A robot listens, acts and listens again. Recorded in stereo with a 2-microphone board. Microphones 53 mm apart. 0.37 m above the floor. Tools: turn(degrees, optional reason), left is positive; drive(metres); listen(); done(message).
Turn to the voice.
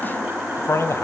turn(degrees=60, reason="The man speaking: about 60° left or 120° left.")
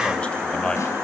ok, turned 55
turn(degrees=15, reason="So it is at 15° left.")
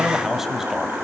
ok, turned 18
turn(degrees=-10, reason="The man speaking is now 10° right.")
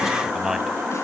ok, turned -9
turn(degrees=-10, reason="The man speaking is now 10° right.")
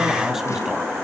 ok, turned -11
listen()
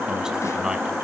turn(degrees=-15, reason="The man speaking is now 15° right.")
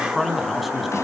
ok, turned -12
done("Found it: a man speaking, straight ahead, 2 to 4 m away.")